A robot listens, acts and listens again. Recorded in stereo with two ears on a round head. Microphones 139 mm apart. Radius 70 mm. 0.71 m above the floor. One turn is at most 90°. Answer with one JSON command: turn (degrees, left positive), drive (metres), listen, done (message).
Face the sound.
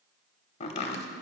{"turn": 40}
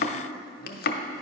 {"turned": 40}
{"turn": 90}
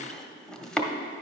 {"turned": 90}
{"done": "Facing the chopping, under 1 m away."}